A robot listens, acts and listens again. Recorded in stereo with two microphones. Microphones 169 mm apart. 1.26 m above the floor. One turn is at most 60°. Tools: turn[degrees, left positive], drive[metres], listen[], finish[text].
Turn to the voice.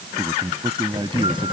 Thought: The man speaking: about 30° right or 150° right.
Action: turn[-30]
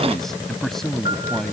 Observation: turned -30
Action: finish[Found it: a man speaking, straight ahead.]